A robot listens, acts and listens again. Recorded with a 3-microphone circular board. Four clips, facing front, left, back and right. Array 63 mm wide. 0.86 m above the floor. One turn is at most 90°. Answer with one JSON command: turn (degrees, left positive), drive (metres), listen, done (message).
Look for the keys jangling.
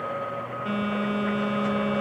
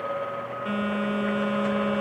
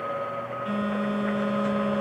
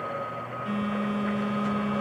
{"listen": true}
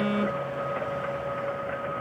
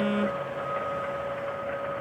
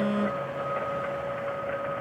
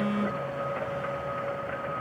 {"listen": true}
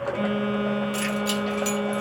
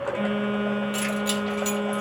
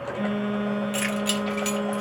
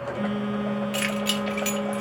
{"turn": -90}
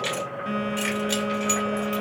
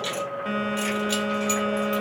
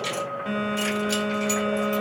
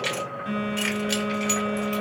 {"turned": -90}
{"turn": -80}
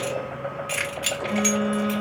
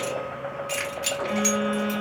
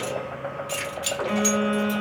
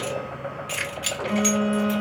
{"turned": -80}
{"turn": 10}
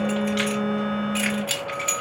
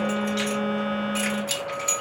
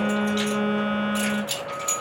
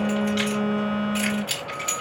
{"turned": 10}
{"done": "Found it: keys jangling, straight ahead, 2 to 4 m away."}